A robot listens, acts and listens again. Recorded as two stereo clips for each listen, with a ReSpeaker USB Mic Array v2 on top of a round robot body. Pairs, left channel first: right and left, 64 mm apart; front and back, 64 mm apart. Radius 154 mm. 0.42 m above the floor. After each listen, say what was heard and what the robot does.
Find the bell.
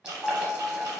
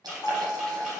Facing the bell, 1 to 2 m away.